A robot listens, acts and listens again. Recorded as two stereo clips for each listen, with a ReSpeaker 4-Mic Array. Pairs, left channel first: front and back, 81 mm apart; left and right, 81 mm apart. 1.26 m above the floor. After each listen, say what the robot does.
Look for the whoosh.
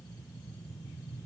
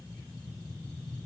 Keep listening.
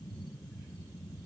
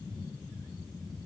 Keep listening.
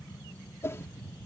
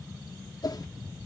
Turn 55° left.
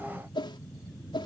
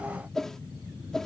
Facing the whoosh.